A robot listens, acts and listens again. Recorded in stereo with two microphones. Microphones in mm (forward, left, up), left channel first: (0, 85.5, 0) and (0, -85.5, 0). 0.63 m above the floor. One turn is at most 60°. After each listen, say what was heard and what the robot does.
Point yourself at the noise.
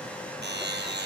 Turn 60° right.
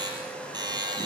So it is at 25° right. Turn 25° right.
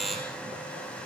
Facing the buzzer.